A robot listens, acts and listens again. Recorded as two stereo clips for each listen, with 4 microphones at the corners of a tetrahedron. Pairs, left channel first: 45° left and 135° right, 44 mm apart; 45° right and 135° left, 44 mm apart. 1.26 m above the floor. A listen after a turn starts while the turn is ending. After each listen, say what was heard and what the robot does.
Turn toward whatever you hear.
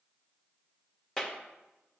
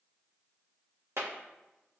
The clap: 120° left. Turn 120° left.
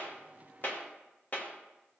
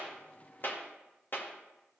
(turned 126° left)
Facing the clap.